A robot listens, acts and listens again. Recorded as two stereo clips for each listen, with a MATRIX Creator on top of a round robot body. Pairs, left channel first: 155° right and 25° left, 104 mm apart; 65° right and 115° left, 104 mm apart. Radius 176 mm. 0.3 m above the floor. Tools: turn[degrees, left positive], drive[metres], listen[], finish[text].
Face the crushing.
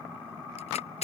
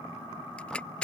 Thought: The crushing: 145° right.
Action: turn[-145]
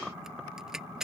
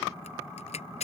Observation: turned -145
Thought: The crushing is now 60° right.
Action: turn[-60]
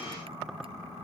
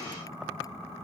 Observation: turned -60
Action: listen[]
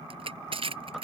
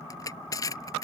Thought: The crushing is now 10° right.
Action: turn[-10]
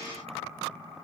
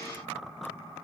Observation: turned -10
Action: listen[]
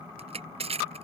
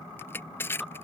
Action: finish[Found it: crushing, straight ahead.]